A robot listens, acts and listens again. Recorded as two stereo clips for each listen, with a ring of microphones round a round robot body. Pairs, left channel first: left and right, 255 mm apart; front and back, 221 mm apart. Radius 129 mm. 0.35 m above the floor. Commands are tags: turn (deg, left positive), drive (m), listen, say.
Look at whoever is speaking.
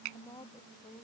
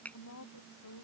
<turn deg="15"/>
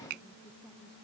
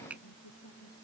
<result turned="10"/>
<listen/>
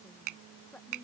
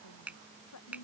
<say>Facing the woman speaking.</say>